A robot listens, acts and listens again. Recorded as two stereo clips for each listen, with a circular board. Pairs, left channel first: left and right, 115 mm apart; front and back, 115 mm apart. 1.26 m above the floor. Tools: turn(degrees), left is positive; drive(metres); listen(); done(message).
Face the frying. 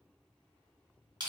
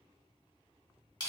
listen()
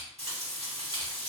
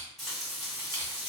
turn(degrees=-95)
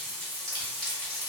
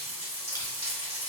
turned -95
done("Facing the frying, 1 to 2 m away.")